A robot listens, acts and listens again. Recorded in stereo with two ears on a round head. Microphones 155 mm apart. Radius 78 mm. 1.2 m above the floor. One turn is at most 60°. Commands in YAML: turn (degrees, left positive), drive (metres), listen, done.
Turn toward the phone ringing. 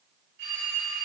turn: -60
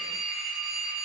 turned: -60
done: "Found it: a phone ringing, straight ahead, 2 to 4 m away."